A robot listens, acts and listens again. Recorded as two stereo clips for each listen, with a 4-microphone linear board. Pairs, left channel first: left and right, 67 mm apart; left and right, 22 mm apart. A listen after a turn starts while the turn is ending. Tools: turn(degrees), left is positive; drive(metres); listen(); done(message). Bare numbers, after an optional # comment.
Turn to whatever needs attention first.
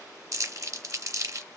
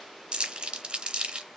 listen()
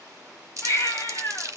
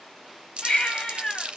# The baby crying: about 45° left or 135° left.
turn(45)
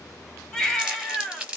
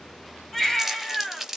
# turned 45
# So it is at 10° left.
turn(10)
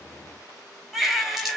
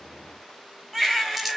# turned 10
done("Found it: a baby crying, straight ahead.")